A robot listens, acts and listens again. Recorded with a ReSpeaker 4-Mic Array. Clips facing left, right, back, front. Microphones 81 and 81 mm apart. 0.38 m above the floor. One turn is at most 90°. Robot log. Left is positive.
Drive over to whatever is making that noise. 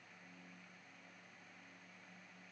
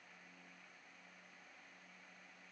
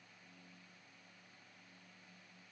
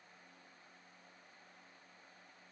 cmd idle
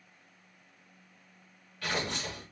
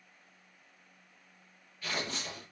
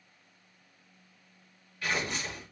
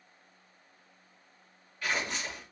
note: The tearing paper: 90° left.
cmd yaw +90
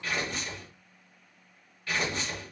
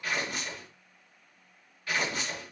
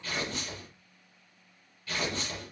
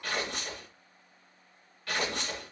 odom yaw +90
cmd fwd 1.0
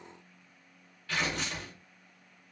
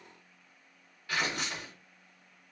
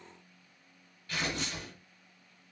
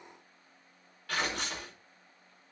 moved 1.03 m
note: The tearing paper is now 10° right.
cmd yaw -10
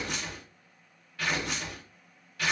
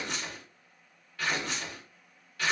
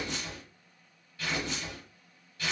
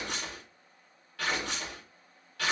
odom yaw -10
cmd fwd 1.0
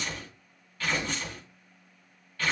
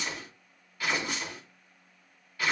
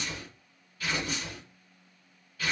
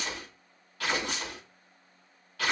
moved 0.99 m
note: The tearing paper is now 10° right.
cmd yaw -10
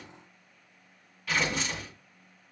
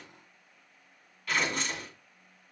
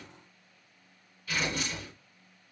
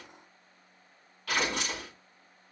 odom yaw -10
cmd fwd 1.0
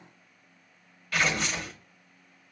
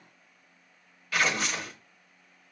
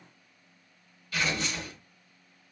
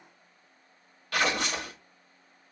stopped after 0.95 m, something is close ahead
end: Arrived at the tearing paper, straight ahead.